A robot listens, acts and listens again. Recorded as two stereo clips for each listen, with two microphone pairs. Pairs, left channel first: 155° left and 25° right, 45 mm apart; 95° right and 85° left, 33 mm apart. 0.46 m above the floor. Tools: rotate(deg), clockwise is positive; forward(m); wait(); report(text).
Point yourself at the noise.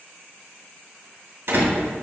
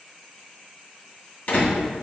rotate(50)
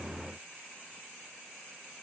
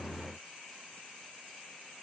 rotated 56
report("Facing where the door slam came from. I can't hear it now.")